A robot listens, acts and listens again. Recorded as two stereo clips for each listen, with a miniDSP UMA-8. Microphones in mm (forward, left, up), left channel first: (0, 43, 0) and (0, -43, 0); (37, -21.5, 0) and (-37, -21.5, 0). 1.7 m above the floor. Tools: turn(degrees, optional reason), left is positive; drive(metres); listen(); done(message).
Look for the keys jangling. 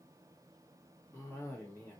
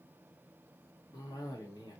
listen()
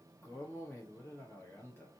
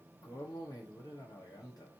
listen()
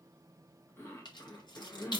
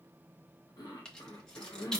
turn(degrees=80, reason="The keys jangling: 80° left.")
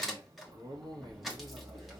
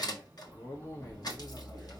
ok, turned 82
done("Found it: keys jangling, straight ahead, 1 to 2 m away.")